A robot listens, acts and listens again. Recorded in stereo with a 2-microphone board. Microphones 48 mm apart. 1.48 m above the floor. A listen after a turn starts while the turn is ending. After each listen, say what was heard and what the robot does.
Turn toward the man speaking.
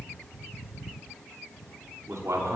Turn 90° right.
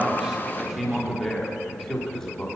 So it is at 10° left. Turn 10° left.
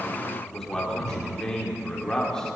The man speaking is now 10° left. Turn 10° left.
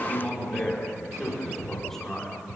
Found it: a man speaking, straight ahead, over 4 m away.